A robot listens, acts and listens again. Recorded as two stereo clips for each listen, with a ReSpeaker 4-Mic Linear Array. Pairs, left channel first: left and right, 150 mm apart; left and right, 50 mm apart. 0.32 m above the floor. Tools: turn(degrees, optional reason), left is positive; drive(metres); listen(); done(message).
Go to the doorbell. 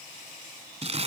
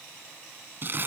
listen()
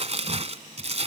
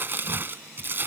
listen()
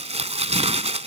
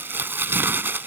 done("I can't make out a doorbell, only crumpling.")